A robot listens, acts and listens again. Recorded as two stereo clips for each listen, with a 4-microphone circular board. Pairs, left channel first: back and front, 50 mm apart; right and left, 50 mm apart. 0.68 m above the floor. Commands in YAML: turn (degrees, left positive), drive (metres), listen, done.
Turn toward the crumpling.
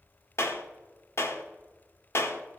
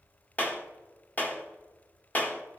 listen: true
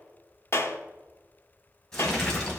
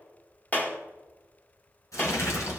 turn: -105
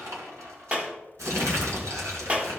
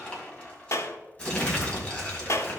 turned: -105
turn: -20
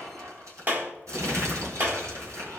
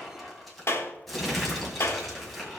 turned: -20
done: "Facing the crumpling, 2 to 4 m away."